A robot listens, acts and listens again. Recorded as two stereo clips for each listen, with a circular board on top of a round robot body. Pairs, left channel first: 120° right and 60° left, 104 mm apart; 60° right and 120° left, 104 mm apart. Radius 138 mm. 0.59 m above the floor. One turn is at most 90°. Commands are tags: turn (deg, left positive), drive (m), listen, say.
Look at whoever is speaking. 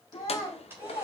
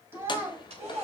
<turn deg="-90"/>
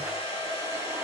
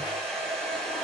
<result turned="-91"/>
<turn deg="-80"/>
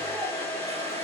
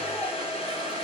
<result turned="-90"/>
<turn deg="10"/>
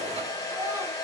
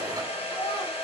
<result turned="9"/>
<say>I heard a child speaking from this way, but can't make it out now.</say>